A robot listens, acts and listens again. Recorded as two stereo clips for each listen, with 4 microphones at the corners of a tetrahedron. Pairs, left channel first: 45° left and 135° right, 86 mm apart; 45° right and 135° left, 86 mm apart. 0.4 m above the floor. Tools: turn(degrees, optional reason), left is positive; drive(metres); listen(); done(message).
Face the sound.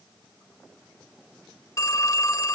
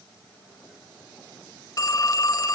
done("Facing the phone ringing.")